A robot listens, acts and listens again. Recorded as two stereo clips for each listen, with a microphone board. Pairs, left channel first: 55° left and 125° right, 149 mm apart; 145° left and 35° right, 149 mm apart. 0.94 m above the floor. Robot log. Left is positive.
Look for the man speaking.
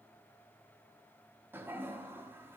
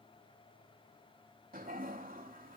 cmd idle
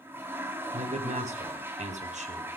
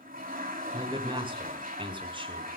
note: The man speaking: 90° right.
cmd yaw -90
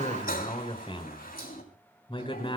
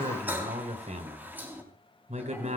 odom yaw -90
end: Found it: a man speaking, straight ahead.